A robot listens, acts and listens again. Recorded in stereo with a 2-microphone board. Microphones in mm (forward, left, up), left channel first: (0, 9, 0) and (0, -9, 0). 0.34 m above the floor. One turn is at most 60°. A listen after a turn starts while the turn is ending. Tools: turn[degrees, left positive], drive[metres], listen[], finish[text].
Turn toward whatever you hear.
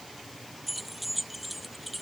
Action: turn[-30]
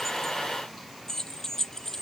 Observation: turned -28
Thought: So it is at 30° left.
Action: turn[30]
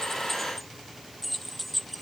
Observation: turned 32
Action: finish[Found it: keys jangling, straight ahead.]